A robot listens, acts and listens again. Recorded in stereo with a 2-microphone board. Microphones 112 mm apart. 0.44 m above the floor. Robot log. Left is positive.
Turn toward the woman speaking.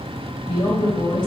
note: The woman speaking: about 45° left or 135° left.
cmd yaw +45
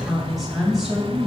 end: Found it: a woman speaking, straight ahead, 2 to 4 m away.